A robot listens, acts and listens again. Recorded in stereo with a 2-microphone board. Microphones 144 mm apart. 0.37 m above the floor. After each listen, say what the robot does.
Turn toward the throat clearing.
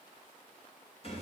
Keep listening.
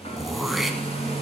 Turn 30° left.
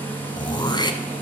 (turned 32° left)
Turn 150° left.
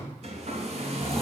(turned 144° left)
Keep listening.
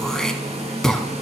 Found it: throat clearing, straight ahead.